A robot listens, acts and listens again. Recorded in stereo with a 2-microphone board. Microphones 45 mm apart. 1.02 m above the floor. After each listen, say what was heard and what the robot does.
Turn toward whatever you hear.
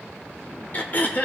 The throat clearing: about 40° left or 140° left. Turn 40° left.
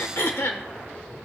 So it is at 95° left. Turn 95° left.
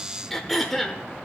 Found it: throat clearing, straight ahead.